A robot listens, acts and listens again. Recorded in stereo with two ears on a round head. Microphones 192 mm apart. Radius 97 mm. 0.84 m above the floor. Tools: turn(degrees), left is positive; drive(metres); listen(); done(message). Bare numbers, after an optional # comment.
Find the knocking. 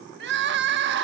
listen()
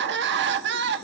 listen()
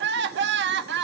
done("I can't make out knocking, only crying.")